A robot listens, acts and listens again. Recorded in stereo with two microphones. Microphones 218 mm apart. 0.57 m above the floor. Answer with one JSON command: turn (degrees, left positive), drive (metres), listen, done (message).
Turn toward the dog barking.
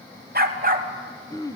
{"turn": -40}
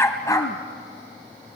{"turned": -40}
{"turn": 15}
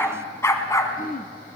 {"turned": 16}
{"turn": 15}
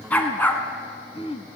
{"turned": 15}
{"turn": 10}
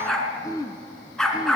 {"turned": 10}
{"done": "Found it: a dog barking, straight ahead, 2 to 4 m away."}